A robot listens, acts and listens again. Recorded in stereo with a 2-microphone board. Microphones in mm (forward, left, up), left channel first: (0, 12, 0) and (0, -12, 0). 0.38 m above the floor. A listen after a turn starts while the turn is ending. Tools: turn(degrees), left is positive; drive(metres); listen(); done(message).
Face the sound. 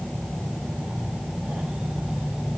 listen()
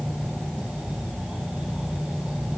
listen()
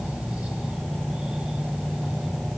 done("I can't make out anything.")